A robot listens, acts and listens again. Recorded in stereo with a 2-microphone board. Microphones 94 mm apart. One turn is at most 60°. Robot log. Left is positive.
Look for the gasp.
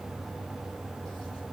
cmd idle
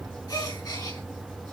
note: The gasp: about 40° left or 140° left.
cmd yaw +40
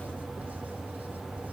cmd idle
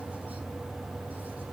end: I heard a gasp, but can't make it out now. It was about straight ahead or 100° left.